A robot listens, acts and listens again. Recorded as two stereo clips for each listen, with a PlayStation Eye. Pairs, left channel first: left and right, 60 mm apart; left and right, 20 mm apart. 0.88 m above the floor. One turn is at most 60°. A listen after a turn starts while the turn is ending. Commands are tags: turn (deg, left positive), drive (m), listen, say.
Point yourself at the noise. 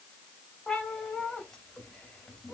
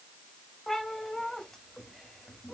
<turn deg="30"/>
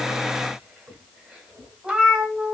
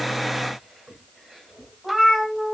<turn deg="-20"/>
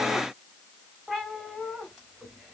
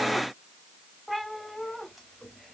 <turn deg="-10"/>
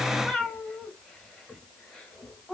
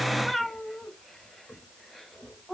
<say>Facing the cat meowing.</say>